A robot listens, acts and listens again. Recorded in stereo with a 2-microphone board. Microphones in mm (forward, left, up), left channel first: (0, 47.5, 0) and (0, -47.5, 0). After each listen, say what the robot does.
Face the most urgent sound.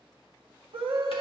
Turn 65° right.
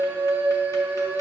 Turn 20° right.
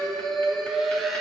Found it: a scream, straight ahead.